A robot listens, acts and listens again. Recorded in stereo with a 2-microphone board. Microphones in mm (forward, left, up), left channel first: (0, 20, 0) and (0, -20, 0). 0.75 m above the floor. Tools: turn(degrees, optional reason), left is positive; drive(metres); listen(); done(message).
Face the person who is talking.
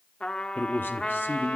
turn(degrees=60, reason="The man speaking: about 60° left or 120° left.")
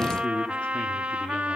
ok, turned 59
turn(degrees=35, reason="So it is at 35° left.")
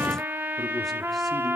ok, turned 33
listen()
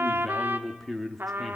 done("Facing the man speaking, 1 to 2 m away.")